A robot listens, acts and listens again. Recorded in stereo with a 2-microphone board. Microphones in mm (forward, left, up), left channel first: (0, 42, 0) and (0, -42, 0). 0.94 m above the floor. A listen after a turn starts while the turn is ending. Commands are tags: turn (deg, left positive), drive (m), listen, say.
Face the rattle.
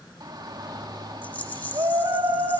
<turn deg="20"/>
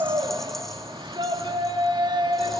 <listen/>
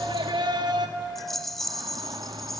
<say>Facing the rattle, 1 to 2 m away.</say>